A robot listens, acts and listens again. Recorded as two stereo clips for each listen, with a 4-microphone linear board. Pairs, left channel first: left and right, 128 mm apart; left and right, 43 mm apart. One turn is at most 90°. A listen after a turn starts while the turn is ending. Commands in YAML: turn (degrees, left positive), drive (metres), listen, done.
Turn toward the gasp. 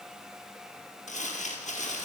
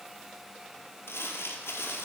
listen: true
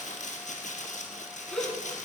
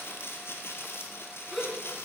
turn: 30
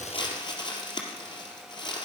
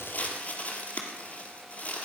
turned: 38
listen: true
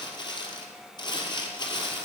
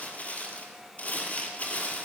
done: "I heard a gasp, but can't make it out now. It was about 35° right or 140° left."